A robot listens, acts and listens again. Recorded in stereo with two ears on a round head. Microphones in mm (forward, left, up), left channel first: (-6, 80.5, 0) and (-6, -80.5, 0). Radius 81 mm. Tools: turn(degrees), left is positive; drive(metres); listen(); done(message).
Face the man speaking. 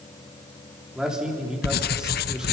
turn(degrees=-30)
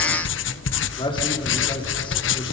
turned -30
turn(degrees=30)
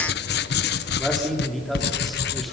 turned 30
done("Found it: a man speaking, straight ahead.")